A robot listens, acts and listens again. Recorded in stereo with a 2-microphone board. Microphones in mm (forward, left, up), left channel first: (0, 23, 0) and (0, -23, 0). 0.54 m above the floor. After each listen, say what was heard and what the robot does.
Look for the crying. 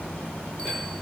Keep listening.
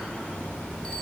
Keep listening.
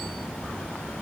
I can't make out crying to turn to.